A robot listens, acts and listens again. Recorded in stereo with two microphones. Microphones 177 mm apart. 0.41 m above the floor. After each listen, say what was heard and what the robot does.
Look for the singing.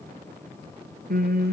The singing: about 60° right or 120° right. Turn 60° right.
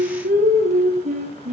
So it is at 45° right. Turn 45° right.
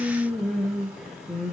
Facing the singing.